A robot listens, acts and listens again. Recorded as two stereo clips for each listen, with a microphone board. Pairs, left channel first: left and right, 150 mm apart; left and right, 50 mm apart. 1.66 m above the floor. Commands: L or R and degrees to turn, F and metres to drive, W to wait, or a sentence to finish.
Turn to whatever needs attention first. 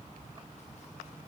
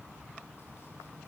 W
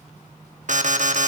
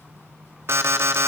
R55
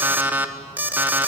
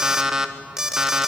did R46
R10
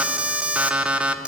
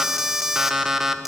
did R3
R10
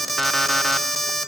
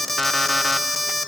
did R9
Found it: an alarm, straight ahead.